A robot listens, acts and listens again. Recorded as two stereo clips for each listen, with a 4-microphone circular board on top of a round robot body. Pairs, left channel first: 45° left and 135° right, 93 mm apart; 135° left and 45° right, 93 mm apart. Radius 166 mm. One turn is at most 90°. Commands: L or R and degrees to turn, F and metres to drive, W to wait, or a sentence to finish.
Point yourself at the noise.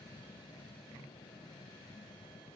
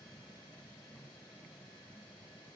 W
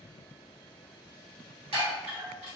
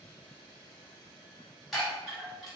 R90
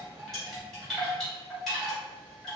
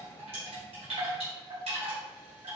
R45
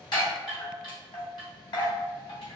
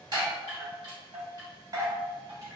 Facing the chime.